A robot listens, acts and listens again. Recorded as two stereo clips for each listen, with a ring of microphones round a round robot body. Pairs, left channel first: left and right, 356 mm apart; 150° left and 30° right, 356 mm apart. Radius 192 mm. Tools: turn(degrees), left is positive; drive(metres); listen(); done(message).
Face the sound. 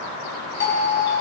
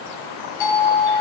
turn(degrees=150)
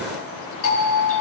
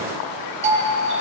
turn(degrees=40)
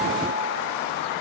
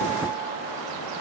listen()
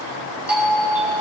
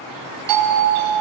done("Found it: a doorbell, straight ahead.")